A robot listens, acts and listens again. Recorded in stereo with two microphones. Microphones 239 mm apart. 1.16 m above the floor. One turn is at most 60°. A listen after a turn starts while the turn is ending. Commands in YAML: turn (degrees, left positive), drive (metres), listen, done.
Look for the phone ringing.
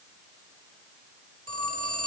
turn: -60
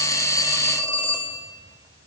turn: -15
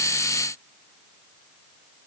listen: true
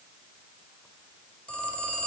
done: "Facing the phone ringing."